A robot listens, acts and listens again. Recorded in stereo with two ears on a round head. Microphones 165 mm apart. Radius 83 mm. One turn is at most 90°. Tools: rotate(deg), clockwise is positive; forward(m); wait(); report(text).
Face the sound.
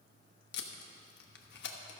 rotate(-60)
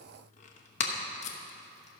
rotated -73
rotate(-40)
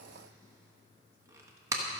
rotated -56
rotate(15)
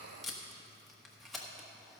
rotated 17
report("Facing the tape being pulled, 1 to 2 m away.")